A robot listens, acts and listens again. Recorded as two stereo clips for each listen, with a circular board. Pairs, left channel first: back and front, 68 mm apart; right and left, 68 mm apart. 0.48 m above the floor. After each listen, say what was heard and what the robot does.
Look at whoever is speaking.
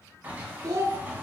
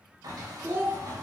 The child speaking: 30° left. Turn 30° left.
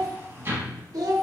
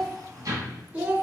The child speaking is now 20° left. Turn 20° left.
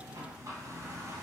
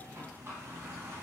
Keep listening.
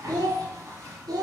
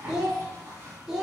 Found it: a child speaking, straight ahead, under 1 m away.